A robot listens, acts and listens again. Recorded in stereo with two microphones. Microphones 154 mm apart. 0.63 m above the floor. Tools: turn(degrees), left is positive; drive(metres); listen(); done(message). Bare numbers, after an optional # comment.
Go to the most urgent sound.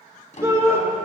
# The shout: about 20° right or 160° right.
turn(-20)
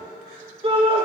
# So it is at 140° right.
turn(-140)
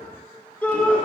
# The shout is now 10° left.
turn(10)
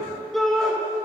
drive(1.0)
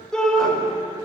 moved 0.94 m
drive(1.0)
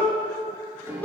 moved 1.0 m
# The shout is now 15° left.
turn(15)
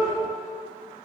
listen()
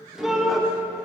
drive(1.0)
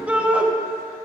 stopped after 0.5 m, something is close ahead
# The shout is now 10° right.
turn(-10)
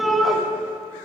done("Arrived at the shout, straight ahead.")